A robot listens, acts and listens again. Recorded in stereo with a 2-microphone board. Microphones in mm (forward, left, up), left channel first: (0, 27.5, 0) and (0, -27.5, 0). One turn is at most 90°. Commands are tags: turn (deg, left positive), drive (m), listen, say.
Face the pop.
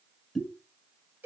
<turn deg="-30"/>
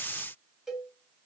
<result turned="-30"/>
<listen/>
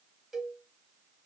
<say>I heard a pop, but can't make it out now. It was about 25° left or 145° right.</say>